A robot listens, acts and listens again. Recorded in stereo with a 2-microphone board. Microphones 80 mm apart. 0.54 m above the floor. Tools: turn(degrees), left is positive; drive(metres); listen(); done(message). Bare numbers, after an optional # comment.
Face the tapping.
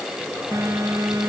listen()
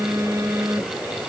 listen()
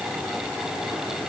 done("I can't make out tapping, only a phone buzzing.")